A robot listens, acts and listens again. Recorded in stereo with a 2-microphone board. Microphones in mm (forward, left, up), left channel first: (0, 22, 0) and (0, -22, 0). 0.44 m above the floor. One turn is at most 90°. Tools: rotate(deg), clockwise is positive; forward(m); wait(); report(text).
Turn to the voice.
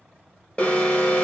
wait()
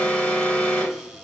wait()
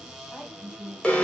rotate(-15)
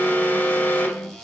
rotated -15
wait()
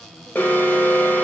wait()
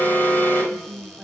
report("Facing the woman speaking.")